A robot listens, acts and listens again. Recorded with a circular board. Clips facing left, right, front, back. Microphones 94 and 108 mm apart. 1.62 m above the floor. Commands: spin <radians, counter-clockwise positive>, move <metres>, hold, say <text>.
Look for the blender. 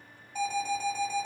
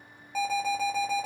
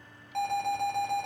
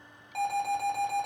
hold
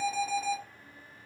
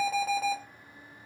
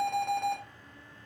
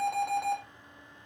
hold
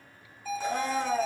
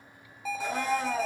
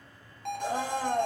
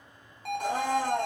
spin -2.97
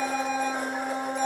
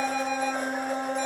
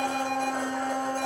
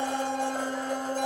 spin 0.17
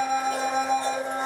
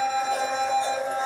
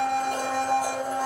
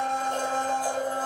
say Facing the blender.